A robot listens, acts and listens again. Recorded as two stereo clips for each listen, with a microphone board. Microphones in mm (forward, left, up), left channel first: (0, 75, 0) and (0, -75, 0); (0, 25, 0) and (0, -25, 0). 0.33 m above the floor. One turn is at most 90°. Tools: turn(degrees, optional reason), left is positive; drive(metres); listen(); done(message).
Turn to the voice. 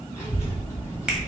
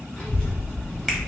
turn(degrees=20, reason="The child speaking: about 20° left or 160° left.")
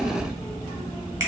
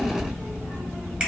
turn(degrees=90, reason="So it is at 140° left.")
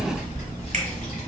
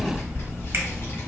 turn(degrees=75, reason="The child speaking is now 75° left.")
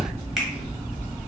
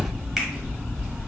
turn(degrees=-15, reason="The child speaking is now 15° right.")
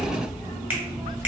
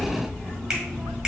done("Facing the child speaking.")